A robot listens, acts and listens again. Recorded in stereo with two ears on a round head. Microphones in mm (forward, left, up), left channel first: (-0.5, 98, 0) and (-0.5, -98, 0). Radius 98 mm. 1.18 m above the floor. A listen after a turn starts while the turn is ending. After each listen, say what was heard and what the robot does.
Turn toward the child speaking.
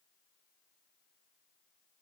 Keep listening.
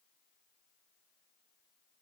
Keep listening.
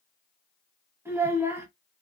Turn 30° right.
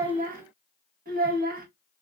So it is at 140° right. Turn 140° right.
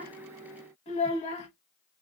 The child speaking is now 30° left. Turn 30° left.
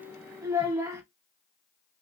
The child speaking is now 15° right. Turn 15° right.
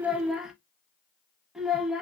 Found it: a child speaking, straight ahead.